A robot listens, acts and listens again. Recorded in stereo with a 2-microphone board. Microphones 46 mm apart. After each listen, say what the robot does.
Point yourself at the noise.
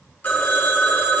Turn 40° left.
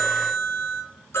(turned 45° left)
Turn 90° left.
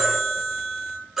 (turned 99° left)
Turn 10° right.
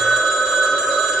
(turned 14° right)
Found it: a phone ringing, straight ahead.